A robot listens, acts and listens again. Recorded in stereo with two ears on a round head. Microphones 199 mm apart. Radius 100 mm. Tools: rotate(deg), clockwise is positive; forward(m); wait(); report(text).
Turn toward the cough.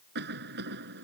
rotate(45)
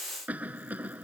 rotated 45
report("Found it: a cough, straight ahead.")